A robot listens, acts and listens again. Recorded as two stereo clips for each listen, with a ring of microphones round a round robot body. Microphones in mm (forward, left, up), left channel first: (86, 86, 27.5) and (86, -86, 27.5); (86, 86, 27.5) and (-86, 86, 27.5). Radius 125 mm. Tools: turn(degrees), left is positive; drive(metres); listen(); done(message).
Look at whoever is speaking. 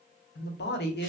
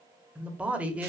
turn(degrees=100)
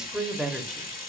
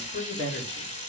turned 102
done("Facing the man speaking.")